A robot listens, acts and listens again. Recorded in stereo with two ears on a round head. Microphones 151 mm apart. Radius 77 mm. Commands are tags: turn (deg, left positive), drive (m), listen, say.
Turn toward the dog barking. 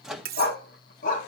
<turn deg="50"/>
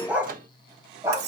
<turn deg="-20"/>
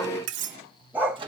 <turn deg="-15"/>
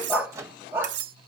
<turn deg="-15"/>
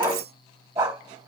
<turn deg="-15"/>
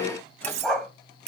<say>Facing the dog barking.</say>